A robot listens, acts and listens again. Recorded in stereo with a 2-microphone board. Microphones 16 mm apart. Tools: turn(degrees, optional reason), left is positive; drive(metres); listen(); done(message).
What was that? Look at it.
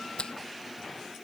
turn(degrees=90)
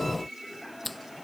done("Found it: a finger snap, straight ahead.")